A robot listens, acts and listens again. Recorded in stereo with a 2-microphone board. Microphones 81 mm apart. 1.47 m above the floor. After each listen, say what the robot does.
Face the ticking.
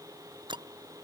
Turn 75° right.
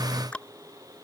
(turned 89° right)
Turn 15° left.
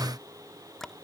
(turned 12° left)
Found it: ticking, straight ahead.